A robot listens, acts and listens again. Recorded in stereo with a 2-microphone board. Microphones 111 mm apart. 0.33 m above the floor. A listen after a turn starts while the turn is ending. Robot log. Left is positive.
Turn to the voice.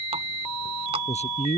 cmd yaw +90
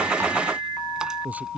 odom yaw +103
note: So it is at 15° right.
cmd yaw -15
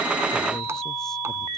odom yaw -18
cmd idle
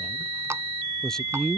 end: Facing the man speaking.